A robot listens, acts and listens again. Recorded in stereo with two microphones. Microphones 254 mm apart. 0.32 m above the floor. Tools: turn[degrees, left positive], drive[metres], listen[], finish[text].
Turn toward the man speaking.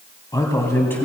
Action: turn[30]
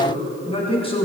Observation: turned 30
Thought: So it is at 160° left.
Action: turn[160]
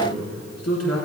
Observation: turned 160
Thought: The man speaking is now 75° left.
Action: turn[75]
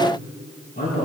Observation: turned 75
Thought: The man speaking is now 40° left.
Action: turn[40]
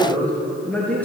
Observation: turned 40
Action: finish[Found it: a man speaking, straight ahead, over 4 m away.]